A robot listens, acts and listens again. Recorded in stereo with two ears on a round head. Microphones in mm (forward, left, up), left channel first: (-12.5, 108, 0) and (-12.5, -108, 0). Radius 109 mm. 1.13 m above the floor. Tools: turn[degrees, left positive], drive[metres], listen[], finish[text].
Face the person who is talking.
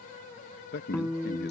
Thought: The man speaking: about 45° left or 135° left.
Action: turn[45]
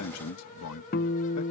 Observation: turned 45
Thought: So it is at 90° left.
Action: turn[90]
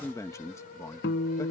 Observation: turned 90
Thought: The man speaking is now 15° left.
Action: turn[15]
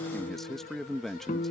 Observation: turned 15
Action: finish[Found it: a man speaking, straight ahead.]